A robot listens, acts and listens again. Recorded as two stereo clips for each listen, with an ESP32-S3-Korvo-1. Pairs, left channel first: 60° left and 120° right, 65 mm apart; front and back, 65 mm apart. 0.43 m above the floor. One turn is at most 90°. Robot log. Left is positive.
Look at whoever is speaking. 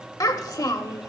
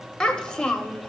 note: The child speaking: 75° left.
cmd yaw +75
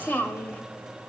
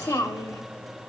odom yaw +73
end: Found it: a child speaking, straight ahead.